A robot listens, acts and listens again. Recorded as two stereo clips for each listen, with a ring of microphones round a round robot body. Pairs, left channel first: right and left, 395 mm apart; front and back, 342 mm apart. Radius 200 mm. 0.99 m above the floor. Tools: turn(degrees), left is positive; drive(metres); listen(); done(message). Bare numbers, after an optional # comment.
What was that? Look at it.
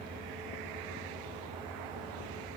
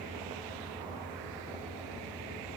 listen()
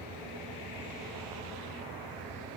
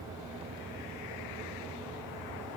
listen()
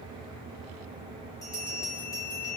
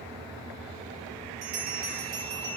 # The bell: 170° right.
turn(-170)
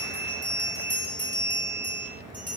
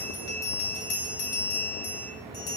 done("Facing the bell.")